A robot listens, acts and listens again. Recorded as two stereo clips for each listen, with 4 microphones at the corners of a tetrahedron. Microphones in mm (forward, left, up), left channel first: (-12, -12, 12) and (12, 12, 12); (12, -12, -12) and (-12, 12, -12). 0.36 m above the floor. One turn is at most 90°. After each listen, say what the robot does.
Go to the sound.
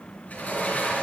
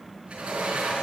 Turn 90° right.
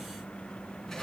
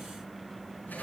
Turn 55° right.
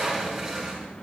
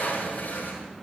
Turn 25° right.
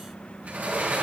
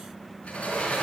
Drive 1.0 m forward.
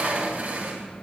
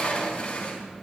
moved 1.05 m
Turn 10° left.
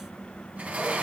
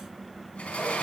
Drive 1.0 m forward.
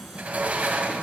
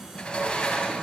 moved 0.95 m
Turn 10° left.
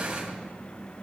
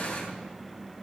Drive 1.0 m forward.
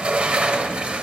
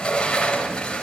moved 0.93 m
Drive 1.0 m forward.
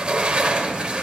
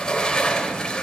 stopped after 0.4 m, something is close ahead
Arrived at the sliding door, straight ahead.